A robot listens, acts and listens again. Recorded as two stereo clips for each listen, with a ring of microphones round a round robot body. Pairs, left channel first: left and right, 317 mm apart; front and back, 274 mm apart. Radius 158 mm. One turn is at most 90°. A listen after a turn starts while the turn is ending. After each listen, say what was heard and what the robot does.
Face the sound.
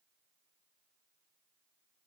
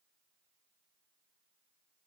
Keep listening.
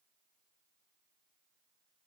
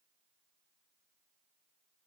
Keep listening.
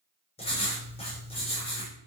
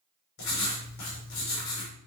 The writing: 20° left. Turn 20° left.
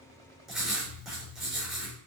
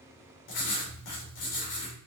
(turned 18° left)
Found it: writing, straight ahead.